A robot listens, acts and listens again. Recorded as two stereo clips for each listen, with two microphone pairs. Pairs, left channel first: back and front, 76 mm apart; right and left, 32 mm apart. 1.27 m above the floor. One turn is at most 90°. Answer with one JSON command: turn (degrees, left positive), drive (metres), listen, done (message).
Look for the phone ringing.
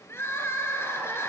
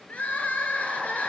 {"listen": true}
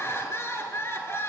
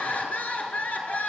{"listen": true}
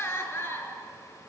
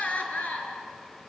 {"done": "I can't make out a phone ringing to turn to."}